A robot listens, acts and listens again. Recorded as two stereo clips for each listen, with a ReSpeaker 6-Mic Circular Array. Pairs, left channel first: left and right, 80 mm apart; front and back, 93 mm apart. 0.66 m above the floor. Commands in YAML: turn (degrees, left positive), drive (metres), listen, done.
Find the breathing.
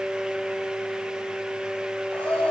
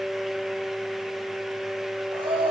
turn: 165
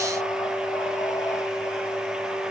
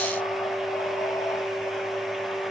listen: true
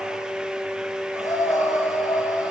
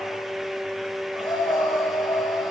turn: 40
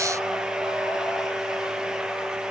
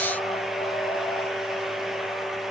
listen: true
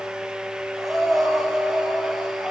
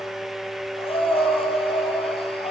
done: "Facing the breathing."